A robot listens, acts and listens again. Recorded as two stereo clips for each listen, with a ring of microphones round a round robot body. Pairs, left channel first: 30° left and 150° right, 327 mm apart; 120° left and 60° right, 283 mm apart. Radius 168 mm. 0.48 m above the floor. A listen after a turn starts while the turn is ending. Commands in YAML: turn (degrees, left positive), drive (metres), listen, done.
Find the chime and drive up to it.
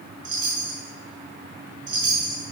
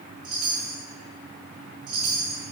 turn: -95
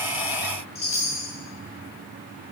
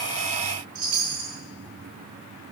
turn: -40
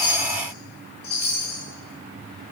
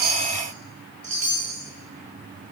turn: -30
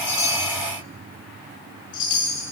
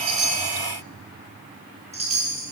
turn: 10
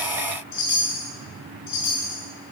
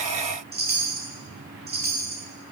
drive: 1.0
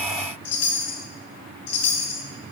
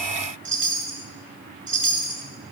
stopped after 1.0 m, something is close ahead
turn: -15
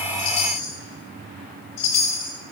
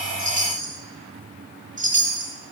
done: "Arrived at the chime, straight ahead."